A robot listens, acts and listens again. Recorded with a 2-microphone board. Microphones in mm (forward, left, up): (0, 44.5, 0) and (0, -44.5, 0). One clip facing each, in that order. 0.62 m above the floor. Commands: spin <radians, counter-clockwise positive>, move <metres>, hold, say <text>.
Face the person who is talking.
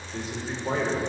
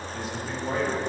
spin 0.44
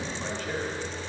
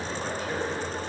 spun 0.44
spin -0.17
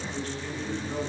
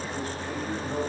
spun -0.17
spin -0.26
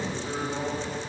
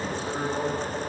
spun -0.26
spin -0.17
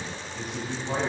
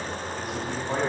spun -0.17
say Found it: a man speaking, straight ahead.